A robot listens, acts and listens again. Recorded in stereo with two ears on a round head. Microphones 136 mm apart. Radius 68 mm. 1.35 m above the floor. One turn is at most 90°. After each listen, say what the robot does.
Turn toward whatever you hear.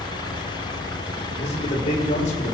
Turn 50° left.
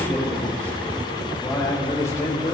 Turn 20° left.
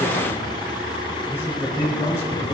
Turn 15° left.
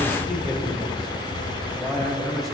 Found it: a man speaking, straight ahead, over 4 m away.